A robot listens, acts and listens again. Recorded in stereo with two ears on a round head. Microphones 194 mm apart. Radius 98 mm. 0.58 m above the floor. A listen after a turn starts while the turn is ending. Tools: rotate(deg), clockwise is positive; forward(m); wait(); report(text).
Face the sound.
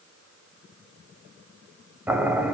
rotate(30)
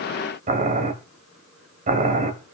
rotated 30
rotate(140)
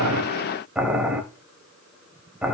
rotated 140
report("Found it: boiling, straight ahead, 1 to 2 m away.")